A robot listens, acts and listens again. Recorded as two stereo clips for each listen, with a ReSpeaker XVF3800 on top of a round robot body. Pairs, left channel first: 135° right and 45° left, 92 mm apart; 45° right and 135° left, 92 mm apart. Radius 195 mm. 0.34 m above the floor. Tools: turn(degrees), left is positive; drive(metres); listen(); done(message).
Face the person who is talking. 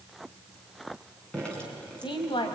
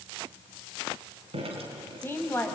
turn(degrees=-110)
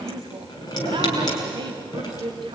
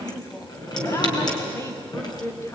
turn(degrees=15)
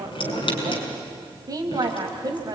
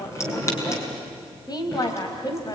done("Found it: a woman speaking, straight ahead, 2 to 4 m away.")